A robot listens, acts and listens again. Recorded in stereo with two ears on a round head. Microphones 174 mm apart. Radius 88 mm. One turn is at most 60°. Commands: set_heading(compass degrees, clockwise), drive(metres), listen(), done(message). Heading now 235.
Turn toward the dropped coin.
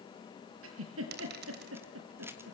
set_heading(290)
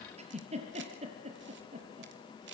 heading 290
listen()
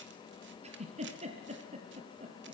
done("I heard a dropped coin, but can't make it out now. It was about straight ahead or 70° right.")